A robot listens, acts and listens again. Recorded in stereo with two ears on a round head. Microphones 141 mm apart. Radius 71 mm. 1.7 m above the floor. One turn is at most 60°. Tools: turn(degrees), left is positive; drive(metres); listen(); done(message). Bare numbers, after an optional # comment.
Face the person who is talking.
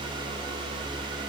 listen()
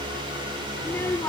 # The child speaking: about 15° left or 165° left.
turn(15)
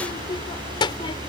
# The child speaking: about 30° left or 150° left.
turn(30)
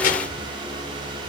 # So it is at 120° left.
turn(60)
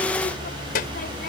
# The child speaking is now 60° left.
turn(60)
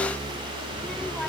listen()
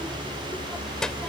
done("Found it: a child speaking, straight ahead.")